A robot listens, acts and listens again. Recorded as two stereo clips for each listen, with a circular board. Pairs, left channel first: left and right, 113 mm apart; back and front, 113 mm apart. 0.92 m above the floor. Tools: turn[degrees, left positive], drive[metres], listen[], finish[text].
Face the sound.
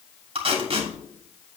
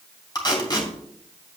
Thought: The tape being pulled: 125° right.
Action: turn[-125]
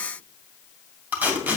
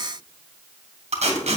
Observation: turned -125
Thought: The tape being pulled is now 15° right.
Action: turn[-15]
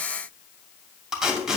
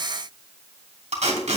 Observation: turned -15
Action: finish[Found it: tape being pulled, straight ahead.]